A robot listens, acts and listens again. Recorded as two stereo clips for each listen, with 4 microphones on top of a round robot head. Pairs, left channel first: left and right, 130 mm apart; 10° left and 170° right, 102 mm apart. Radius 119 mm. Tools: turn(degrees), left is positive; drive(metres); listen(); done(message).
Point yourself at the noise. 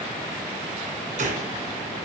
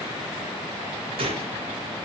turn(degrees=-125)
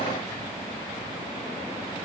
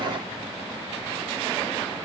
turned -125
done("I heard a gunshot from this way, but can't make it out now.")